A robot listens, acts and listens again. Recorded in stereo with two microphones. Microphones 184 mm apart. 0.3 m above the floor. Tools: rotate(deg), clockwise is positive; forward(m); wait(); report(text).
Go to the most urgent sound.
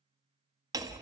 wait()
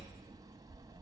wait()
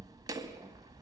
report("I can't make out anything urgent, only hammering.")